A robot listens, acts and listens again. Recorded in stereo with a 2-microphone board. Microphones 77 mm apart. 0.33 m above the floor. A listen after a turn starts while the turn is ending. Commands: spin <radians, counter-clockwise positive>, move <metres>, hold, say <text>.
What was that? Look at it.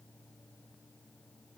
hold
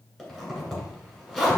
spin 0.52
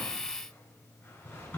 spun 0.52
spin 2.53
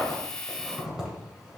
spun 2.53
spin -0.17
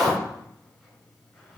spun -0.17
say Found it: a zipper, straight ahead.